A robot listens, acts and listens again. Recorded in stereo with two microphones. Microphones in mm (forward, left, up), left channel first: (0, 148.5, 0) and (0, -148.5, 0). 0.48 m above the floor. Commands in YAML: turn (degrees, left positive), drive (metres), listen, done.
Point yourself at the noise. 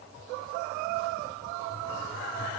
listen: true
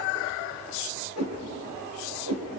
turn: -60
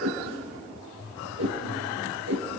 turn: -60
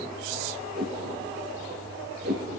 turn: -35
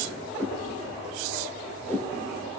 done: "Facing the whoosh."